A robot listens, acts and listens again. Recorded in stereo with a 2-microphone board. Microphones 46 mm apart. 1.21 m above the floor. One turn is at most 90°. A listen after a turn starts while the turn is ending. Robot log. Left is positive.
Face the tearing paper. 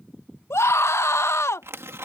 cmd yaw -90
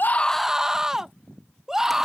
cmd idle
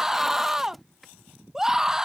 end: Facing the tearing paper.